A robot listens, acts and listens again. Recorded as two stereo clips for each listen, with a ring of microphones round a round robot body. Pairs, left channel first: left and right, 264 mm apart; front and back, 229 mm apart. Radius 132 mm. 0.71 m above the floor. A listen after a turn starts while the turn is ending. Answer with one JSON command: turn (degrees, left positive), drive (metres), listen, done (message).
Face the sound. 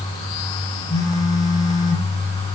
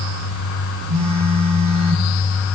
{"turn": 170}
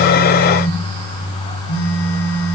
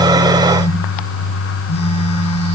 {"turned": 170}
{"turn": 65}
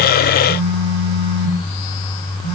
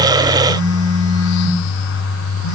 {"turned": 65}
{"turn": 35}
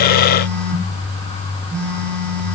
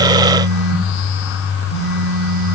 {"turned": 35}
{"done": "Facing the phone buzzing, 2 to 4 m away."}